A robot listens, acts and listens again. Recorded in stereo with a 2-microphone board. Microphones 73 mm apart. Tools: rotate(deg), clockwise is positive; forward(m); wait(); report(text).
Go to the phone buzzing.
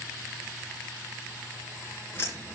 wait()
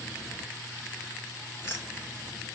wait()
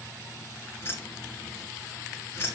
report("I can't make out a phone buzzing, only keys jangling.")